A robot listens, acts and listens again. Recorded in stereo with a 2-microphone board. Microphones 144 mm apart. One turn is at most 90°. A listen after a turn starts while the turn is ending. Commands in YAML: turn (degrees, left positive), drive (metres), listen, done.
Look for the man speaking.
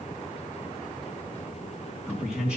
turn: -30
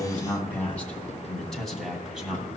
turn: -30
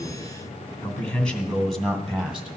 turn: -30
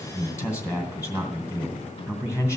turn: 20
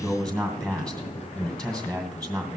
done: "Found it: a man speaking, straight ahead."